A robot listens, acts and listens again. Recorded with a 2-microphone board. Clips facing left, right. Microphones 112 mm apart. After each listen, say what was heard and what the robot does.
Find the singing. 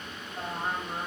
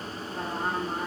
Turn 90° right.
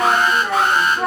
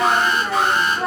Facing the singing, 1 to 2 m away.